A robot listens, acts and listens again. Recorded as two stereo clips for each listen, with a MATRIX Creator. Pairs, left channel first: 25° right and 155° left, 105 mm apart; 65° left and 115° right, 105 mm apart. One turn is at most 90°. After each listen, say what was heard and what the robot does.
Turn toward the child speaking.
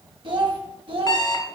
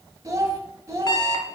The child speaking: 175° right. Turn 90° right.
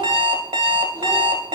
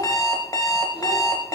Nothing new. It was at 85° right. Turn 85° right.
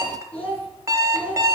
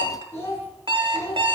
Found it: a child speaking, straight ahead, 2 to 4 m away.